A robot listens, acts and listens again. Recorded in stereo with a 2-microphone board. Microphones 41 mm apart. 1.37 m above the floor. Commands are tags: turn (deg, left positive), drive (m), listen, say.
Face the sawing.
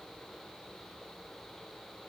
<listen/>
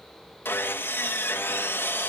<turn deg="70"/>
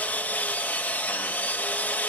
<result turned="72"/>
<turn deg="35"/>
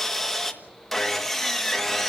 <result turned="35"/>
<say>Found it: sawing, straight ahead, 1 to 2 m away.</say>